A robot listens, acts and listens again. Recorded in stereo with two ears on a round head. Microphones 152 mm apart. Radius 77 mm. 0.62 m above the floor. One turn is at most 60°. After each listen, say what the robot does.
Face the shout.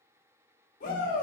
Turn 50° left.
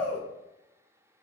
Turn 10° left.
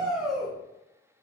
Facing the shout, 1 to 2 m away.